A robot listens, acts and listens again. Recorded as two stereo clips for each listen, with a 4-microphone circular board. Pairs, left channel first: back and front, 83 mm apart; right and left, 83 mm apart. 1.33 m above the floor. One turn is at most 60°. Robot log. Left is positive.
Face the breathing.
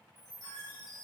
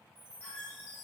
cmd idle
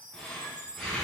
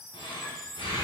note: The breathing: 100° right.
cmd yaw -60
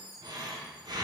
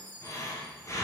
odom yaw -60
note: The breathing is now 35° right.
cmd yaw -35
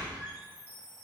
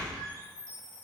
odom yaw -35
note: The breathing is now 10° right.
cmd yaw -10
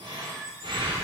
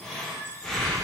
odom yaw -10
end: Facing the breathing, under 1 m away.